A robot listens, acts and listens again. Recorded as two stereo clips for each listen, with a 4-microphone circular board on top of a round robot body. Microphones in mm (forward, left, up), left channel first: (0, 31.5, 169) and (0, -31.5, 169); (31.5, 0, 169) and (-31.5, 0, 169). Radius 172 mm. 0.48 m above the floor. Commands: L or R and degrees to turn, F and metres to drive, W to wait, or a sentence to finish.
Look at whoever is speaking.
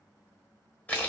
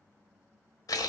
W
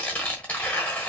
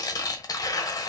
W
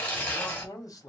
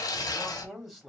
L90
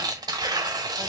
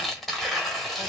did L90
W
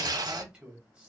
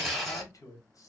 R20
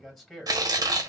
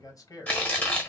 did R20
Found it: a man speaking, straight ahead, 1 to 2 m away.